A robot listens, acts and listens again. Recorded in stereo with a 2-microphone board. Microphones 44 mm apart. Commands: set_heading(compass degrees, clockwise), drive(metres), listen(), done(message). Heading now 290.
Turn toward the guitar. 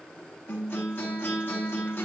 set_heading(230)
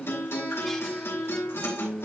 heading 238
set_heading(173)
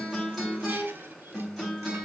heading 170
done("Facing the guitar.")